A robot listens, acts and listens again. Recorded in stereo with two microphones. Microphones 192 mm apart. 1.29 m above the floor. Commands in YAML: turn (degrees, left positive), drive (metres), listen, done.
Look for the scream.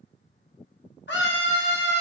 turn: 90
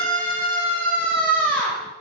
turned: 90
done: "Facing the scream."